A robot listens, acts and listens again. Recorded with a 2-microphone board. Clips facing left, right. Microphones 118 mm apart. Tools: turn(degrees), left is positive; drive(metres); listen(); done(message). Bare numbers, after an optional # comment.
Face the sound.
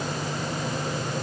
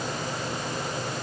listen()
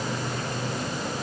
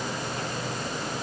listen()
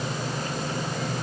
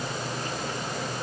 done("I can't make out anything to turn to.")